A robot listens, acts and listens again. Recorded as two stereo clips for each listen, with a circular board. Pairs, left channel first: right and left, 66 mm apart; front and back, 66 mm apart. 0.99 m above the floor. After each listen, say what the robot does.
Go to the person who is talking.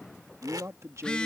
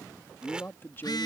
Turn 55° left.
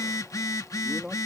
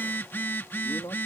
Turn 10° left.
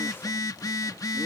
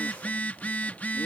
Keep listening.
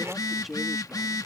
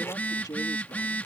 Drive 1.0 m forward.
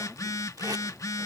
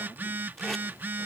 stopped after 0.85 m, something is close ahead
Keep listening.
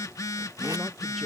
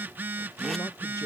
Keep listening.
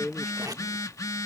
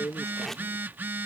Arrived at the man speaking, straight ahead.